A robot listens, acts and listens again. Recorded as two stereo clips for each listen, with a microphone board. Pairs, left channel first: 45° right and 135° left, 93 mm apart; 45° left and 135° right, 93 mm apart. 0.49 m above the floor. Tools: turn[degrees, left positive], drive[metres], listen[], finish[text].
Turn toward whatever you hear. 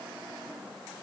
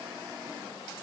Action: listen[]
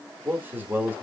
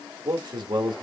Thought: The man speaking: 160° right.
Action: turn[-160]
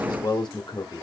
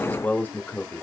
Thought: The man speaking is now 20° right.
Action: turn[-20]
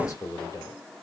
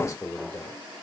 Action: finish[Found it: a man speaking, straight ahead.]